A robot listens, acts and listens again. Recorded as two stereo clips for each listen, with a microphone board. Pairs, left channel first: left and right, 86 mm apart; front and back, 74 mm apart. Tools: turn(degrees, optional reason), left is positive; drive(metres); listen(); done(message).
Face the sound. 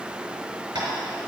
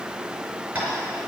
turn(degrees=-115, reason="The tapping: 115° right.")
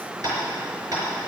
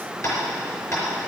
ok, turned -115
turn(degrees=-45, reason="The tapping is now 45° right.")
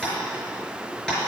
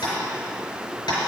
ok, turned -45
done("Facing the tapping.")